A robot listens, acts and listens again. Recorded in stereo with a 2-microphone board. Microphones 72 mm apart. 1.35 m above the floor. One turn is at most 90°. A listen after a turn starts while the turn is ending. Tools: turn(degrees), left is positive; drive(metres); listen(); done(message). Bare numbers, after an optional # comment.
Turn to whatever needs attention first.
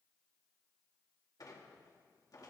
listen()
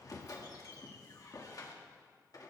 listen()
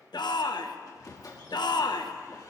turn(90)
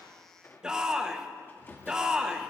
# So it is at 10° right.
turn(-10)
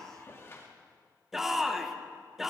done("Found it: a shout, straight ahead, 1 to 2 m away.")